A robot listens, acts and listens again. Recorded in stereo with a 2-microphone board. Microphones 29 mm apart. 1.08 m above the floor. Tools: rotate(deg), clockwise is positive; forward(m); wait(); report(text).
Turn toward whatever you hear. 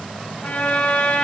rotate(-65)
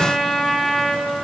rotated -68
report("Facing the trumpet, over 4 m away.")